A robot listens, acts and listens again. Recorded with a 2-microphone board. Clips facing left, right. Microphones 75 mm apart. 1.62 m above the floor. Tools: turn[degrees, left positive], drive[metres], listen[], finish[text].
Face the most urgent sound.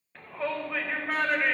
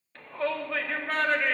Action: turn[30]
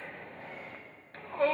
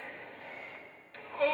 Thought: So it is at 140° left.
Action: turn[140]
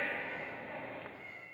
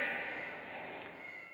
Thought: The shout is now 20° left.
Action: turn[20]
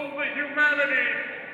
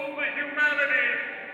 Action: finish[Facing the shout.]